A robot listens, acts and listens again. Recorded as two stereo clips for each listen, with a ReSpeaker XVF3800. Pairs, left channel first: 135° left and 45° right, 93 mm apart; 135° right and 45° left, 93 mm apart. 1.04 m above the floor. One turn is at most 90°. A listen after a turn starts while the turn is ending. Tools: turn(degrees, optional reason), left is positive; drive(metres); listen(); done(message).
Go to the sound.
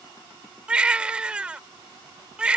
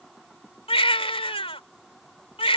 turn(degrees=-90, reason="The baby crying: 125° right.")
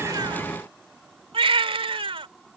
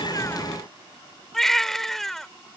turn(degrees=-50, reason="The baby crying is now 50° right.")
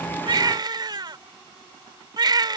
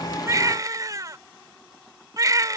drive(metres=1.0)
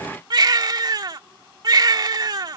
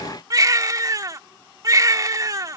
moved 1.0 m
drive(metres=1.0)
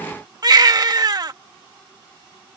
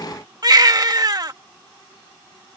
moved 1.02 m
drive(metres=1.0)
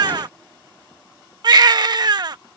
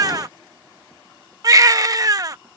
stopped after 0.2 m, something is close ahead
done("I am next to the baby crying.")